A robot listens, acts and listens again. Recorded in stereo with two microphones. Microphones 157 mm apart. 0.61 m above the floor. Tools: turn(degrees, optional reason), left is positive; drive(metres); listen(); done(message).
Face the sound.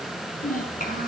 turn(degrees=60, reason="The child speaking: about 60° left or 120° left.")
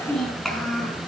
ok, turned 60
done("Facing the child speaking.")